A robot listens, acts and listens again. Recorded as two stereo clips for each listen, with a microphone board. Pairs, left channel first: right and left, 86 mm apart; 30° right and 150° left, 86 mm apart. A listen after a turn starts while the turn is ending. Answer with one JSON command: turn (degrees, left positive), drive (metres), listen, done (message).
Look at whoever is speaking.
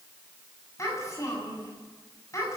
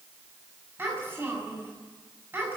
{"turn": -145}
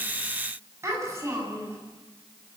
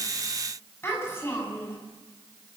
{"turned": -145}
{"turn": 35}
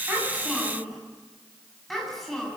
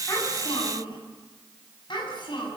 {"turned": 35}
{"done": "Facing the child speaking, over 4 m away."}